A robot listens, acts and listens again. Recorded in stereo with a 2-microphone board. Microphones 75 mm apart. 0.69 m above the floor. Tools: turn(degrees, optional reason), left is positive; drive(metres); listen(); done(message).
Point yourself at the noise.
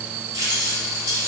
turn(degrees=-75, reason="The keys jangling: about 75° right or 105° right.")
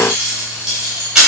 turn(degrees=-10, reason="So it is at 10° right.")
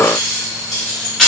done("Facing the keys jangling, 2 to 4 m away.")